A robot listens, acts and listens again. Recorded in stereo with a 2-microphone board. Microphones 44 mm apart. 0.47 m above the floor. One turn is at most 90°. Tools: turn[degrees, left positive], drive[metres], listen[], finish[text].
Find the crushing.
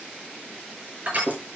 Thought: The crushing: about 35° right or 145° right.
Action: turn[-35]
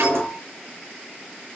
Action: listen[]
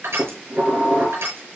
Thought: So it is at 110° right.
Action: turn[-90]
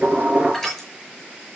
Action: finish[Facing the crushing.]